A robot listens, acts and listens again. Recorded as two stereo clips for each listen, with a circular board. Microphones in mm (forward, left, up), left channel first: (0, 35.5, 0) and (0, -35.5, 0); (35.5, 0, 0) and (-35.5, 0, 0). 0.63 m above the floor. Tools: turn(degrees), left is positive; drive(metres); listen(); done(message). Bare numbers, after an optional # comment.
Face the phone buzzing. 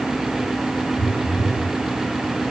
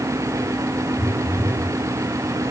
# The phone buzzing: 115° right.
turn(-115)
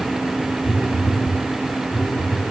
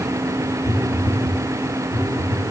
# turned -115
# The phone buzzing is now 10° left.
turn(10)
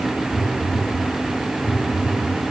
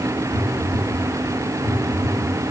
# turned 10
done("Facing the phone buzzing.")